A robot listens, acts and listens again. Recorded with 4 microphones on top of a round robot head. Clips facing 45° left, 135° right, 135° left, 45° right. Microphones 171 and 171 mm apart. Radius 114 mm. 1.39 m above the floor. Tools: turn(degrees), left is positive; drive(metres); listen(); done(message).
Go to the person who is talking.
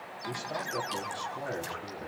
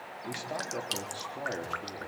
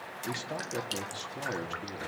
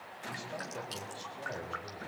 turn(degrees=140)
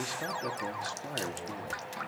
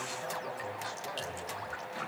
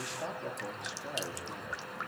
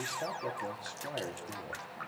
turn(degrees=35)
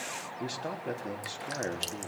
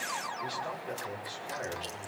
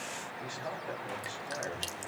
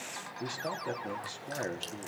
drive(metres=1.0)
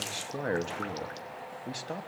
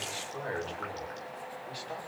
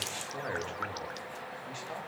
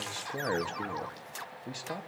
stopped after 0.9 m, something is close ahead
done("Something is in my way. I am facing the man speaking but have not reached it.")